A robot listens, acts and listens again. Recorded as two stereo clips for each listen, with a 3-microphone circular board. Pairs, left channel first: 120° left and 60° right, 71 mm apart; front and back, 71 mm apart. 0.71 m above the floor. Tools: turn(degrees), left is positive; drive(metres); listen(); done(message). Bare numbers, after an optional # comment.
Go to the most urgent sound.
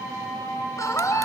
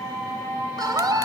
# The scream: 160° left.
turn(160)
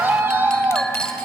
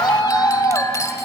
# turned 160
drive(1.0)
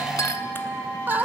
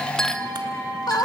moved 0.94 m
drive(1.0)
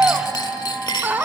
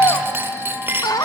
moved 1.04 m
drive(1.0)
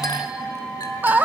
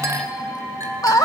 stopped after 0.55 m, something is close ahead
done("Arrived at the scream, straight ahead.")